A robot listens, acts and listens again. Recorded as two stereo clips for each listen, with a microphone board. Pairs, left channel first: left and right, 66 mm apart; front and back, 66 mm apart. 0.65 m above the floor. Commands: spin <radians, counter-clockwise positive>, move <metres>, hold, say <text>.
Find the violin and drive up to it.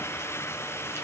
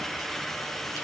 hold
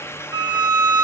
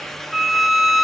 spin -1.66
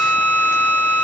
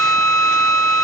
spin 0.44
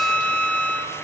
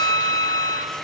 spin 0.26
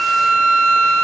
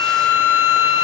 move 1.0
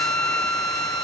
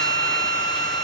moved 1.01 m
spin 0.17
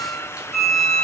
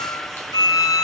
move 1.0
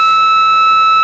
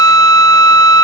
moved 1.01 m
move 1.0
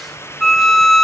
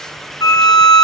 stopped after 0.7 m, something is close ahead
say I am next to the violin.